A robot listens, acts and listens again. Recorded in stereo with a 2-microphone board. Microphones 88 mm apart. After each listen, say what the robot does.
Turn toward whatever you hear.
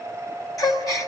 Turn 40° left.
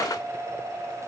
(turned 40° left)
Keep listening.
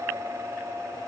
I heard a gasp, but can't make it out now. It was about straight ahead or 100° left.